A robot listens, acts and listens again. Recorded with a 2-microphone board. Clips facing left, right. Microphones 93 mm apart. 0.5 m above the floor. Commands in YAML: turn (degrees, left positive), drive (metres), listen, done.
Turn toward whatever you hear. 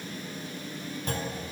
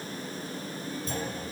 turn: 60
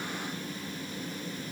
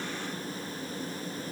listen: true
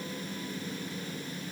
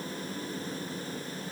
done: "I heard a clunk, but can't make it out now. It was about straight ahead or 60° left."